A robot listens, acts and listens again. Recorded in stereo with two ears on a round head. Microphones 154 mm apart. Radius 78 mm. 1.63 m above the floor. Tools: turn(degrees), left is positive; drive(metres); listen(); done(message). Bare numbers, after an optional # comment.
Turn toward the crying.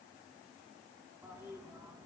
listen()
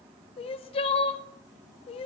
# The crying: about 35° left or 145° left.
turn(35)
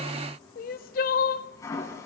# So it is at 100° left.
turn(100)
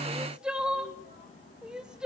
done("Found it: crying, straight ahead.")